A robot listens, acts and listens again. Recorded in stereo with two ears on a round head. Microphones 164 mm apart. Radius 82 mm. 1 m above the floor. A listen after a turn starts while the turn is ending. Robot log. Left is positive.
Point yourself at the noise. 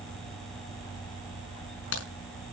cmd yaw +90
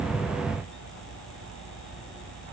end: I heard a crack from this way, but can't make it out now.